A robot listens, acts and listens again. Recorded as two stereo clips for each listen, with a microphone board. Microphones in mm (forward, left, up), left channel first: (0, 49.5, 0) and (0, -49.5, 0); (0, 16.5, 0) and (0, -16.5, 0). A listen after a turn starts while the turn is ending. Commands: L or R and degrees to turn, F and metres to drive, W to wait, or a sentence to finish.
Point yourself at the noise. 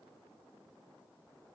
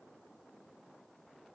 W
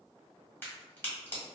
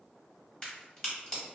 L20
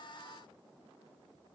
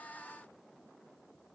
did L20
W
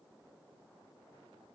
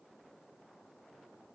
I heard a crack, but can't make it out now. It was about straight ahead or 140° left.